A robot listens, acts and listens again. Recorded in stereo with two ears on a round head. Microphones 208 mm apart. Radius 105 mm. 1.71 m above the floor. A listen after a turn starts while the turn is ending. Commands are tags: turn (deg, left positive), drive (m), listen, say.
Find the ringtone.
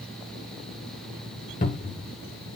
<listen/>
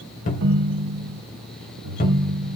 <turn deg="-55"/>
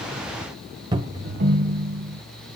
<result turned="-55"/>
<turn deg="-45"/>
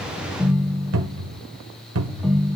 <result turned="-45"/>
<say>Facing the ringtone.</say>